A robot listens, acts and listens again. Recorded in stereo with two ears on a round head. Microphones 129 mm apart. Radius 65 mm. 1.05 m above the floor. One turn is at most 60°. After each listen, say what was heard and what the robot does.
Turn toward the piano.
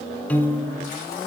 Turn 30° left.
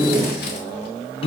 So it is at 140° left. Turn 60° left.
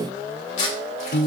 The piano is now 100° left. Turn 60° left.
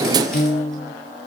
The piano is now 50° left. Turn 50° left.
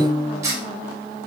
The piano is now 25° left. Turn 25° left.
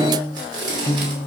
The piano is now 20° left. Turn 20° left.
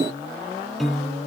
Facing the piano, under 1 m away.